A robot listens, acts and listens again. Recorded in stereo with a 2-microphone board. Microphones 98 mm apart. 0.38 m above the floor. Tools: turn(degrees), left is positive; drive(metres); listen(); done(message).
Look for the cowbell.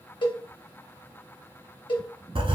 turn(degrees=55)
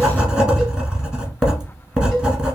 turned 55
listen()
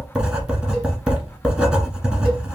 listen()
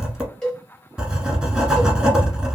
done("Facing the cowbell, 1 to 2 m away.")